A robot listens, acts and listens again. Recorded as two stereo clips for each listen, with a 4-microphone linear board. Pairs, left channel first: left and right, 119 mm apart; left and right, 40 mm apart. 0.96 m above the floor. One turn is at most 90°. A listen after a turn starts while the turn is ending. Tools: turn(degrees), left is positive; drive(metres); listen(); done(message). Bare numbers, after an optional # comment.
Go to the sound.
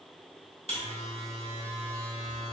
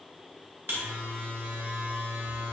# The buzzer: about 65° right or 115° right.
turn(-65)
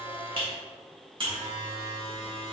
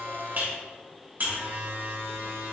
# So it is at 50° right.
turn(-50)
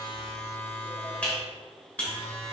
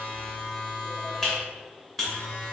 # The buzzer is now 10° left.
turn(10)
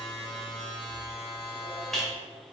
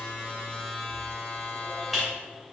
drive(1.0)
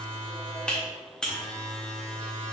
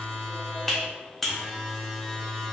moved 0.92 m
# The buzzer is now 10° left.
turn(10)
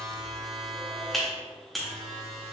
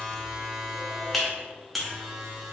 drive(1.0)
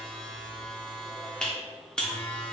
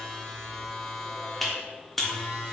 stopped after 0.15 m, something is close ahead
# The buzzer is now 10° left.
turn(10)
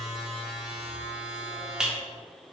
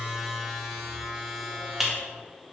done("I am next to the buzzer.")